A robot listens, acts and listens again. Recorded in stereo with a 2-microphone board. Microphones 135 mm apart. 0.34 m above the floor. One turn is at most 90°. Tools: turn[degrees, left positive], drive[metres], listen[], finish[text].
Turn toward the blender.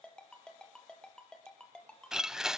Action: turn[-30]
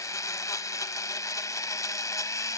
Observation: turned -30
Thought: So it is at 25° left.
Action: turn[25]
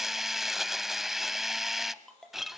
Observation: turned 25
Action: finish[Facing the blender, under 1 m away.]